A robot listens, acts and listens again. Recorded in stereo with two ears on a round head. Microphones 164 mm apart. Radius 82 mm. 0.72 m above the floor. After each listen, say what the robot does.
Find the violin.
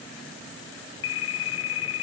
Keep listening.
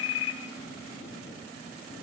Keep listening.
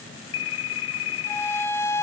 Turn 30° left.
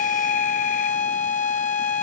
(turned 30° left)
Turn 135° left.
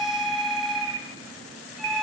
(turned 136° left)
Keep listening.
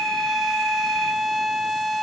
Facing the violin, 1 to 2 m away.